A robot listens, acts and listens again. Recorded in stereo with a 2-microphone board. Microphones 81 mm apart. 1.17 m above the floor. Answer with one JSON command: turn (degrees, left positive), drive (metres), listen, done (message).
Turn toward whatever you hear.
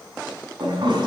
{"turn": -90}
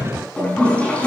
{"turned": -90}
{"turn": 15}
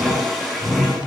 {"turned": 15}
{"done": "Found it: a toilet flushing, straight ahead."}